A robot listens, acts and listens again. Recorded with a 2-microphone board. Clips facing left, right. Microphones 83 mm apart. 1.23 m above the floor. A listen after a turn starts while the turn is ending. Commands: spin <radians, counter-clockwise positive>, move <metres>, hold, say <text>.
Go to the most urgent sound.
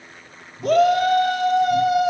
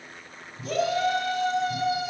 spin 1.05
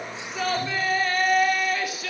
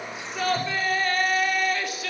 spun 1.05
move 1.0
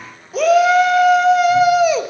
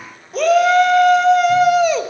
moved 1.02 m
move 1.0
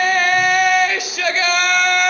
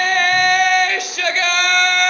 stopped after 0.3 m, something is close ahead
say I am next to the shout.